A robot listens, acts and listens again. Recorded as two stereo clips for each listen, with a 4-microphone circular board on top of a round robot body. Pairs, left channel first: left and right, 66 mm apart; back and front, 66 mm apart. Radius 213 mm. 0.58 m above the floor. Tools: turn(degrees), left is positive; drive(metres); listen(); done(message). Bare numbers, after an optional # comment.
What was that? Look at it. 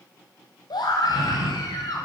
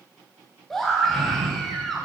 # The scream: 95° left.
turn(95)
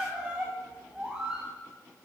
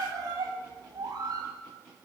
# The scream is now 15° right.
turn(-15)
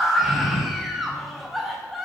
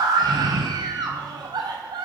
done("Facing the scream.")